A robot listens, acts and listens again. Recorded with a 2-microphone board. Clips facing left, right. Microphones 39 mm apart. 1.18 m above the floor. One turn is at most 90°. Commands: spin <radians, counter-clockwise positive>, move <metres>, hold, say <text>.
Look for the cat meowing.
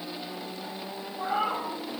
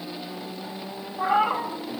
spin -1.22
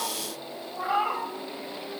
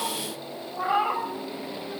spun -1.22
spin -0.17
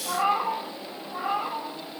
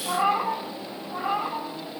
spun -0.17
say Facing the cat meowing, 1 to 2 m away.